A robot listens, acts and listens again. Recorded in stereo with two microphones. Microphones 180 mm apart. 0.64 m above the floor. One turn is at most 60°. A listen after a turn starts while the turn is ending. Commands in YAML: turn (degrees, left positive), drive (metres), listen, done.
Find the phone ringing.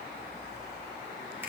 listen: true
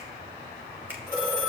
turn: -60
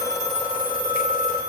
turn: -55
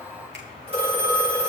turn: -35
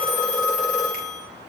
done: "Found it: a phone ringing, straight ahead, over 4 m away."